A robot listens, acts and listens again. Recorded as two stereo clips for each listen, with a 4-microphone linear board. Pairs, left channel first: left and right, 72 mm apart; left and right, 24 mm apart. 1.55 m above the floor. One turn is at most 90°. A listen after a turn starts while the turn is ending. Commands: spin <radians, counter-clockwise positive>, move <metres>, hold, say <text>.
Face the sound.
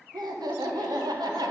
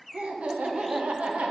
spin -1.22
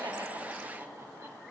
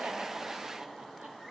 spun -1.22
spin -0.61
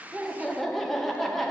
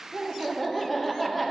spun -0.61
say Found it: laughter, straight ahead.